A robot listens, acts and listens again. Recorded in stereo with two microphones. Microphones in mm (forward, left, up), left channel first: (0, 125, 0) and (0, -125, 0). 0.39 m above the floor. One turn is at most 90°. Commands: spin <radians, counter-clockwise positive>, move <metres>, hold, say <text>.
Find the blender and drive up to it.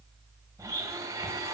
spin -0.52
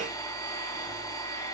spin 0.26
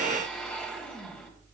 move 1.0
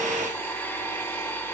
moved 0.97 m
spin 0.17
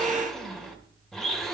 move 1.0
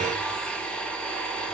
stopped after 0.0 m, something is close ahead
say I am next to the blender.